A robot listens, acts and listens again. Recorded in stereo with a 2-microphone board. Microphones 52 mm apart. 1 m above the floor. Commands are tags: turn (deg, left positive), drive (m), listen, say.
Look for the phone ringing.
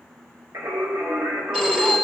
<turn deg="-30"/>
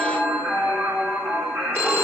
<turn deg="-140"/>
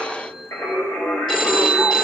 <turn deg="15"/>
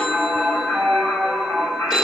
<say>Found it: a phone ringing, straight ahead, 2 to 4 m away.</say>